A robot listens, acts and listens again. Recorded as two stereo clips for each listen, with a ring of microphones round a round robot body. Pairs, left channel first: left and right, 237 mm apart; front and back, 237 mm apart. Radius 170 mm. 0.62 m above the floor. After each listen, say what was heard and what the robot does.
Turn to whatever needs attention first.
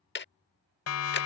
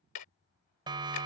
The siren: 105° left. Turn 105° left.
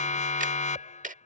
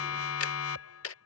The siren is now 30° left. Turn 30° left.
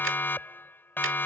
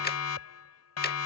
The siren is now 10° left. Turn 10° left.
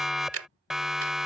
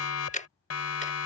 Facing the siren.